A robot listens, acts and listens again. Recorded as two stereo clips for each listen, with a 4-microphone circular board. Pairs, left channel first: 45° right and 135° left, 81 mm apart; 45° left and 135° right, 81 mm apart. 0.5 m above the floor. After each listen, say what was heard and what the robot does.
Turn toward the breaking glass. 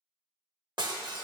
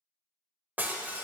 The breaking glass: 155° left. Turn 155° left.
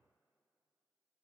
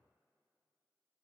I heard breaking glass from this way, but can't make it out now.